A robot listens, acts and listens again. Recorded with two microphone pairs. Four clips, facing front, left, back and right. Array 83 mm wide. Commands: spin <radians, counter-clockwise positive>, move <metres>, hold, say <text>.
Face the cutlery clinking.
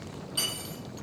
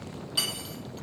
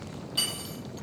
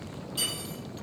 spin 1.48
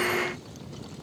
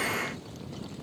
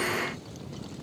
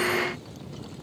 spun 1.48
hold
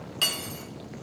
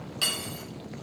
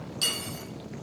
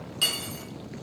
spin 0.17
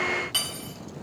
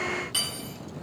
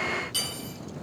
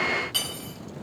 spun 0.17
say Found it: cutlery clinking, straight ahead, 1 to 2 m away.